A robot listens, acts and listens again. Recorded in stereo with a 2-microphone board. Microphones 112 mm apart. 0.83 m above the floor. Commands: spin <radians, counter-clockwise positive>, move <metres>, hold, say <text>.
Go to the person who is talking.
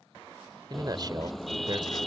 spin -0.70
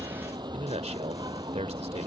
spin -1.75
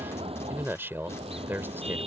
spin -0.35
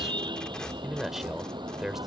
move 1.0
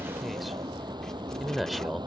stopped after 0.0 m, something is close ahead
say Something is in my way. I am facing the man speaking but have not reached it.